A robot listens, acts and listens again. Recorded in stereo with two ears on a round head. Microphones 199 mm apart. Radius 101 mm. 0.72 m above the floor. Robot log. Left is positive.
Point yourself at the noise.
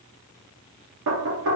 note: The knocking: about 65° right or 115° right.
cmd yaw -65
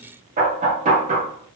note: So it is at 35° right.
cmd yaw -35
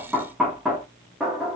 end: Facing the knocking.